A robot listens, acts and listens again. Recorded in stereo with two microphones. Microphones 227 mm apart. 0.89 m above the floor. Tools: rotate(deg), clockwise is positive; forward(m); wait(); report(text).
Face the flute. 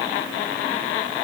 wait()
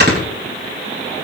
wait()
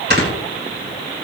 report("I can't make out a flute, only snoring.")